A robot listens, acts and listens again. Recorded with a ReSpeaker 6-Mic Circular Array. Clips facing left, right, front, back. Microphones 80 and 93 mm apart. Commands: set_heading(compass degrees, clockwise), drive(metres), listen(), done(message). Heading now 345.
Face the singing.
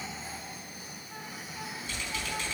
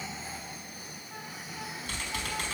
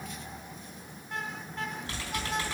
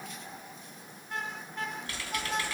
listen()
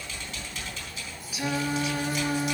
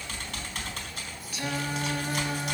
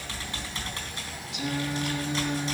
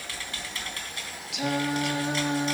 set_heading(170)
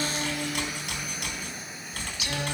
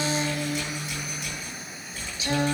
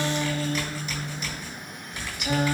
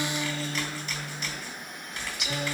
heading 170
set_heading(210)
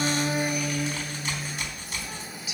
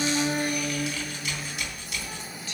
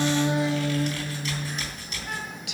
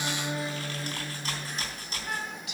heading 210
set_heading(200)
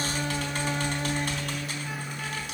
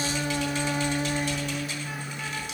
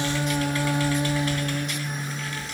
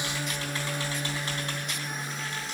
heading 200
done("Facing the singing.")